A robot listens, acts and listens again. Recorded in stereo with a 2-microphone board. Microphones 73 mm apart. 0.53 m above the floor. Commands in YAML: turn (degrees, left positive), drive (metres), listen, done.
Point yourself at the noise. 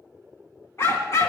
turn: 45
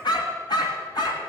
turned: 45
turn: 75
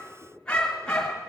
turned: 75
turn: 10
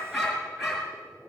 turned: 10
done: "Found it: a dog barking, straight ahead, 2 to 4 m away."